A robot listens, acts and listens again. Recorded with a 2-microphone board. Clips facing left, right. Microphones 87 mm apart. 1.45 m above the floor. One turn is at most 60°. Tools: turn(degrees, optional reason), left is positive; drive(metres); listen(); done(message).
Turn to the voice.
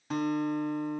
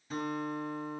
listen()
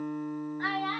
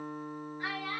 turn(degrees=50, reason="The child speaking: about 50° left or 130° left.")
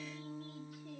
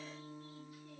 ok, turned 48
listen()
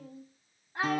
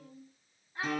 turn(degrees=60, reason="So it is at 80° left.")
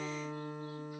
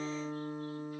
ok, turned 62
turn(degrees=15, reason="Nothing new. It was at 15° left.")
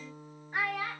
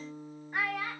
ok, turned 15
done("Facing the child speaking, 2 to 4 m away.")